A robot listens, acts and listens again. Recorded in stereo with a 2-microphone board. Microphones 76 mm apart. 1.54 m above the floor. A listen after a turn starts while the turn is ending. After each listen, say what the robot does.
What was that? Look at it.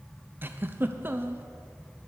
Turn 30° right.
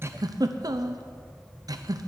Turn 120° right.
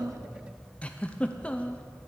Turn 20° left.
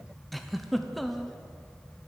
Facing the giggle, under 1 m away.